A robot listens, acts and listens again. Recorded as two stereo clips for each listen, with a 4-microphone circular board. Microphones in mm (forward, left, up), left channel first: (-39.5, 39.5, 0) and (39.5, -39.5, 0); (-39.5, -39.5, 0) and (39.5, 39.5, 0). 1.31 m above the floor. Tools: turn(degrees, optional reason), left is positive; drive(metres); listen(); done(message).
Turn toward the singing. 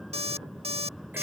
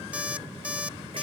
listen()
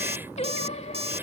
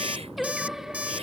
turn(degrees=130, reason="The singing: 130° left.")
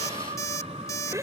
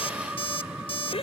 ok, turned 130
turn(degrees=-30, reason="The singing is now 30° right.")
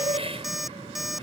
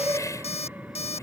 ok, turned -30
turn(degrees=-20, reason="The singing is now 20° right.")
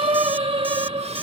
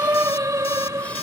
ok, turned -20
turn(degrees=-15, reason="The singing is now 15° right.")
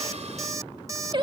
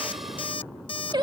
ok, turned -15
done("Facing the singing.")